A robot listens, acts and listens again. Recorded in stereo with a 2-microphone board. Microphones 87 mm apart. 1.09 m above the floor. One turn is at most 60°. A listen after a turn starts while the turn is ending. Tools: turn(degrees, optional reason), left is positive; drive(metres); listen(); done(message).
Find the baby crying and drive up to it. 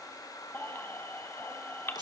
turn(degrees=25, reason="The baby crying: about 25° left or 155° left.")
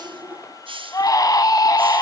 turn(degrees=60, reason="So it is at 130° left.")
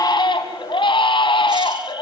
turn(degrees=60, reason="The baby crying is now 85° left.")
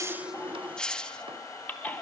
turn(degrees=20, reason="The baby crying is now 20° left.")
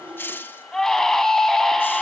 drive(metres=1.0)
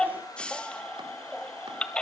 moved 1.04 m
turn(degrees=10, reason="The baby crying is now 10° left.")
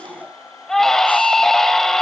drive(metres=1.0)
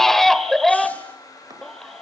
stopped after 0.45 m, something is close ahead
done("Arrived at the baby crying, straight ahead.")